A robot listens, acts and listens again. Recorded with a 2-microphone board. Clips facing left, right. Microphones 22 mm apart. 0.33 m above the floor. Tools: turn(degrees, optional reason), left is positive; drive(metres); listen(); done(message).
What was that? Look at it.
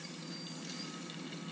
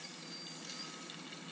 listen()
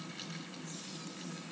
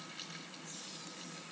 listen()
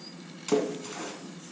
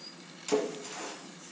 turn(degrees=30)
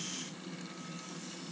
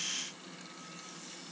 listen()
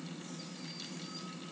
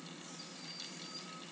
done("I heard a splash, but can't make it out now. It was about 20° right or 140° left.")